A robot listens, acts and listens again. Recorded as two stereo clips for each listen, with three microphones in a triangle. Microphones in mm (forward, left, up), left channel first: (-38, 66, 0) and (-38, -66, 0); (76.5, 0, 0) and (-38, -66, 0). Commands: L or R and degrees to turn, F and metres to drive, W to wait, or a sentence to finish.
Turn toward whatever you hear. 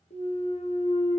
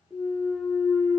L125
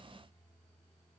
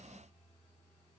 I heard a clunk from this way, but can't make it out now.